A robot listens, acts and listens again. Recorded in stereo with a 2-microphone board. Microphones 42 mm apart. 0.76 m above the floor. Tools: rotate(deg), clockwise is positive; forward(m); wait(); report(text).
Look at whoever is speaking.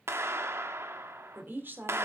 rotate(50)
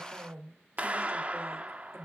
rotate(75)
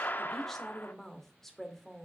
report("Found it: a woman speaking, straight ahead, 2 to 4 m away.")